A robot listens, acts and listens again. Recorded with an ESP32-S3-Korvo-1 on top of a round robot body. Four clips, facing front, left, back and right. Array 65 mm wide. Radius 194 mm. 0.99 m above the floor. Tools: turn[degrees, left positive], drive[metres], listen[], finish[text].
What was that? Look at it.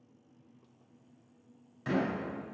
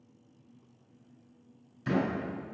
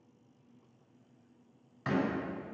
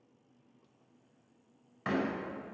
Thought: The door slam: 115° right.
Action: turn[-115]
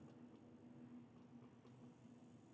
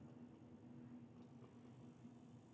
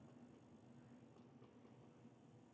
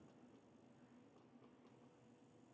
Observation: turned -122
Thought: Nothing new. It was at 10° left.
Action: turn[10]
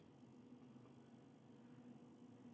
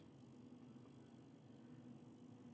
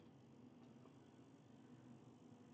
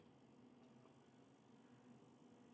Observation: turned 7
Action: finish[Facing where the door slam came from. I can't hear it now.]